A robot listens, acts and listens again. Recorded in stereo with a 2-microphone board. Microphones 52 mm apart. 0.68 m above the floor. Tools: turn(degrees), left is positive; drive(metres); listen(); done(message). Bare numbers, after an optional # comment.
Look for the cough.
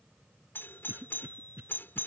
# The cough: about 45° right or 135° right.
turn(-45)
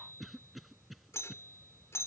done("Found it: a cough, straight ahead.")